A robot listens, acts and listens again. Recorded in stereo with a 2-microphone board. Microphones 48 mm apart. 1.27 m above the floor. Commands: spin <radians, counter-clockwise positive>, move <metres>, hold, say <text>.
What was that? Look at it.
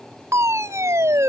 spin -1.31
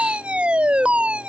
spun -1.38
spin -0.44
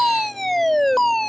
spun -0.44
say Facing the fire alarm.